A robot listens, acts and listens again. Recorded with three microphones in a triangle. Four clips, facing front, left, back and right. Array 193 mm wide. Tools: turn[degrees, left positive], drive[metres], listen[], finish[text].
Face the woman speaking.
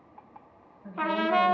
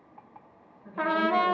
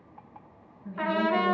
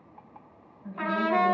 Thought: The woman speaking: 30° right.
Action: turn[-30]
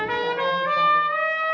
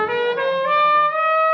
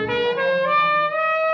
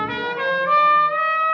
Action: listen[]
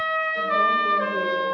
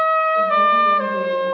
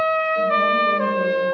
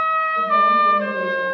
Action: listen[]
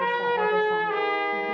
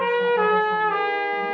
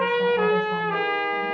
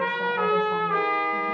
Action: finish[Facing where the woman speaking came from. I can't hear it now.]